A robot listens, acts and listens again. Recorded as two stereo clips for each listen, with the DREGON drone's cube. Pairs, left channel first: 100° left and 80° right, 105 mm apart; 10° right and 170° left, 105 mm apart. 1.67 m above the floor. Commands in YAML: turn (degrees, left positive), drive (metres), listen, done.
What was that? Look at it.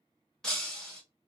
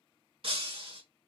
turn: -175
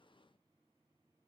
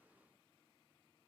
done: "Facing where the breaking glass came from. I can't hear it now."